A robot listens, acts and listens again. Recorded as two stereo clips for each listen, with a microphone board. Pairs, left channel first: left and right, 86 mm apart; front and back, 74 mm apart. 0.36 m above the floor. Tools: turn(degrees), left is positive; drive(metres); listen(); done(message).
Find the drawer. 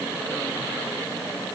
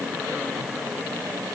listen()
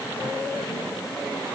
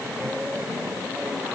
listen()
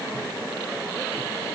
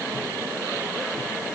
done("I can't make out a drawer.")